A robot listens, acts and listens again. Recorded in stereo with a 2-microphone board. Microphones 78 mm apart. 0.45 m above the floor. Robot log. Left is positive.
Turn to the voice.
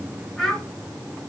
cmd yaw +30
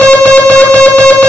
cmd idle
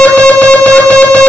cmd idle
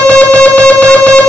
end: I heard a child speaking, but can't make it out now. It was about 25° right or 145° left.